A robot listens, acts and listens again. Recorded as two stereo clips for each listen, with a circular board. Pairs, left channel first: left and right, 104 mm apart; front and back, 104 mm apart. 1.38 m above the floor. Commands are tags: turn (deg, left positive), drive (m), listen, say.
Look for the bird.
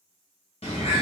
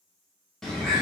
<turn deg="85"/>
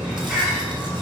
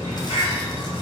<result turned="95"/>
<turn deg="-10"/>
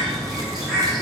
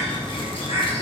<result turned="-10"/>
<say>Found it: a bird, straight ahead, 1 to 2 m away.</say>